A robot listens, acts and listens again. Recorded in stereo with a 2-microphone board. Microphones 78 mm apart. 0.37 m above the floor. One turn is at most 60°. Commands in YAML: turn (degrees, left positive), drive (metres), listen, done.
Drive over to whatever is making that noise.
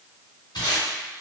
turn: 60
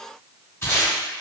turn: 40
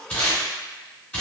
turn: 25
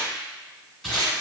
drive: 1.0
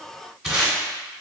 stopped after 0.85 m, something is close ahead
done: "Arrived at the tape being pulled, straight ahead."